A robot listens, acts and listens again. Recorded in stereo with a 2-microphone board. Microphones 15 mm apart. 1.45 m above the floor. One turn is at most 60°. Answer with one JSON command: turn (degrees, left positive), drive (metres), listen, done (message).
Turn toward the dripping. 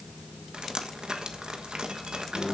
{"turn": -60}
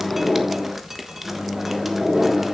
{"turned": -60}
{"turn": -10}
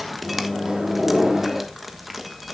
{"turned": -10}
{"done": "Facing the dripping."}